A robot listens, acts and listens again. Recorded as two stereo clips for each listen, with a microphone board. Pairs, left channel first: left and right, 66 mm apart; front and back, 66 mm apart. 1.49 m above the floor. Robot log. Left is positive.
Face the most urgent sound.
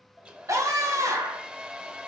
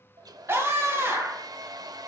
note: The scream: 125° right.
cmd yaw -125
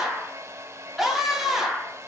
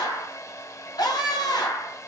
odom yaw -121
end: Found it: a scream, straight ahead, 1 to 2 m away.